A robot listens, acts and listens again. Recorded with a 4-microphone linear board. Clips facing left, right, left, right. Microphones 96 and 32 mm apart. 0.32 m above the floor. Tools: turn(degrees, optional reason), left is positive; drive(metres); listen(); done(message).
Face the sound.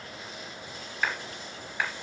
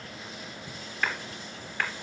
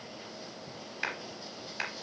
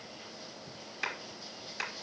turn(degrees=30)
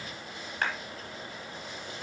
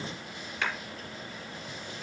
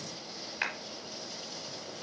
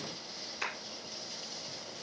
turn(degrees=135, reason="So it is at 135° left.")
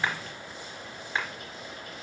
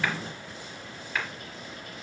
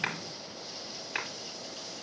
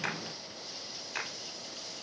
turn(degrees=25, reason="The clap is now 25° left.")
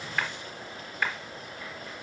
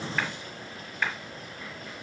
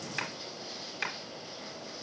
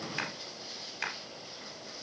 done("Found it: a clap, straight ahead.")